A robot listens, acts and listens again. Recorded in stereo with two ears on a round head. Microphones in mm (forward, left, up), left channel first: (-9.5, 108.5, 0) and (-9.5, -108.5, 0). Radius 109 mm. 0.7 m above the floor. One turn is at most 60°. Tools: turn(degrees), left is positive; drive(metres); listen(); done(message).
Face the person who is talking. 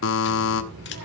turn(degrees=-60)
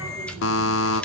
turn(degrees=-10)
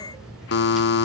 done("Facing the child speaking, over 4 m away.")